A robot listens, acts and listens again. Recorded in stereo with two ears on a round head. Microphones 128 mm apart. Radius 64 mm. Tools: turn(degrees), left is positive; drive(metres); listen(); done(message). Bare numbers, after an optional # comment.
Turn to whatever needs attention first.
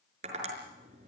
listen()
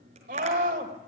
# The scream: about 60° right or 120° right.
turn(-60)
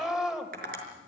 done("Facing the scream, 2 to 4 m away.")